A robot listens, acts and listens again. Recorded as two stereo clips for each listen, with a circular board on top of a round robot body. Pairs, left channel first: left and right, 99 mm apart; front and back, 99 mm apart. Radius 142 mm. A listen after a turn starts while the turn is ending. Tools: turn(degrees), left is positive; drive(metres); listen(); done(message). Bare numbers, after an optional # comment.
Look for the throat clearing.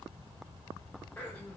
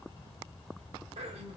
# The throat clearing: 165° left.
turn(165)
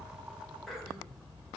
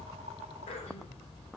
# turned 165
done("Found it: throat clearing, straight ahead, under 1 m away.")